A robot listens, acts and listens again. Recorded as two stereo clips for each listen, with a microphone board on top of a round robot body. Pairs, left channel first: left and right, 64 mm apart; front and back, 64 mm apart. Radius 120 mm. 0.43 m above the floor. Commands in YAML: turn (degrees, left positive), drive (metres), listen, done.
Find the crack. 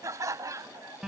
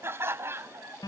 listen: true
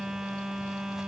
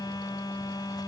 listen: true
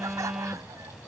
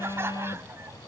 done: "I can't make out a crack, only laughter and a phone buzzing."